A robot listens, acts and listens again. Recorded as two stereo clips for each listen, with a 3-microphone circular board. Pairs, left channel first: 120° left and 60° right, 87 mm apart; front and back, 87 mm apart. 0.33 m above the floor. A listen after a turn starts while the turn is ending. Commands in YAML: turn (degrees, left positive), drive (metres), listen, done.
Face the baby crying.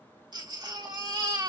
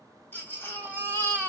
turn: -60
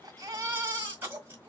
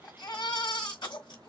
done: "Found it: a baby crying, straight ahead, 1 to 2 m away."